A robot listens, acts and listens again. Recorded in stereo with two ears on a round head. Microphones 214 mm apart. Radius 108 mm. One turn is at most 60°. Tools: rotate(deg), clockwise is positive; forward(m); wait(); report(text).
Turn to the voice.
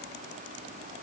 wait()
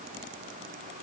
wait()
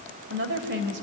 rotate(50)
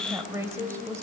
rotate(15)
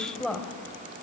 report("Facing the woman speaking, 2 to 4 m away.")